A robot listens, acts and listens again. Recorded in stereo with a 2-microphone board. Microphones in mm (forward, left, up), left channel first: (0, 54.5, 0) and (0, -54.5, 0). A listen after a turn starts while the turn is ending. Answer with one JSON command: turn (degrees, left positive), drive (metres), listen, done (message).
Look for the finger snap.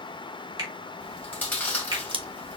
{"turn": -40}
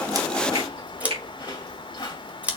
{"turn": -100}
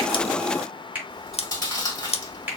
{"turn": -15}
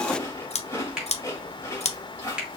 {"done": "Facing the finger snap."}